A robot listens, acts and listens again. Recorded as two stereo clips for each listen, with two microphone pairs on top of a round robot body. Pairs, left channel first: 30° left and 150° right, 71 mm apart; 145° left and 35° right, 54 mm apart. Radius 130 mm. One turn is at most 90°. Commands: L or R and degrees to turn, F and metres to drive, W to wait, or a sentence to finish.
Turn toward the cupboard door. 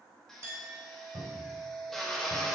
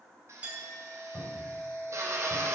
R90
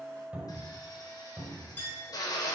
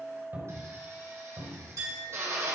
R80
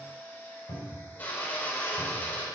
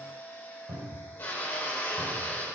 L10
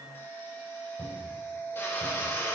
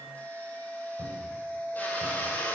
Found it: a cupboard door, straight ahead, over 4 m away.